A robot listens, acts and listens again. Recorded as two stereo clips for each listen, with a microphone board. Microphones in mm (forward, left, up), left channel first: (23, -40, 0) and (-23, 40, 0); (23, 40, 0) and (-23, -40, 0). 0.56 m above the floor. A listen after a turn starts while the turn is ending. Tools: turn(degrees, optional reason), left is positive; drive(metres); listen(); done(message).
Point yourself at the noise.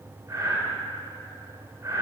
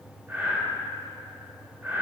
turn(degrees=175, reason="The breathing: 175° left.")
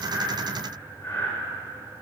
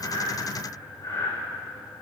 turn(degrees=10, reason="The breathing is now 10° left.")
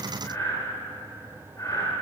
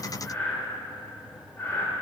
done("Found it: breathing, straight ahead, 1 to 2 m away.")